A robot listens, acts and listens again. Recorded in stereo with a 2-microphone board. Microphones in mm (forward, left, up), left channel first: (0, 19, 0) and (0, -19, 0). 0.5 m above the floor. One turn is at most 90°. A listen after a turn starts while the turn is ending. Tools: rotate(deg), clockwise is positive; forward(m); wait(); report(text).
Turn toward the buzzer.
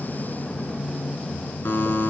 rotate(-75)
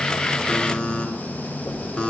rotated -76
rotate(-25)
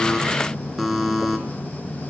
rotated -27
report("Found it: a buzzer, straight ahead, 1 to 2 m away.")